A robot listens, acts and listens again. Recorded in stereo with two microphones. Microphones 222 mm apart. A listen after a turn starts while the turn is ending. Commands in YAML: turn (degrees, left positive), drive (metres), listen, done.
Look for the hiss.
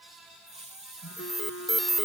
turn: -30
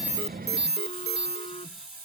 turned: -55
turn: -95
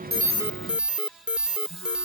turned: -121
turn: 25
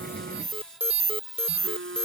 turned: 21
done: "Found it: a hiss, straight ahead."